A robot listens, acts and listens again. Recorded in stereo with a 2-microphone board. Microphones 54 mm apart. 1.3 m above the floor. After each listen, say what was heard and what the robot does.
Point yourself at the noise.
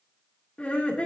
The laughter: about 20° left or 160° left. Turn 20° left.
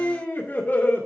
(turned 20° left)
So it is at 140° left. Turn 140° left.
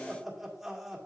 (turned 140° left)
Found it: laughter, straight ahead.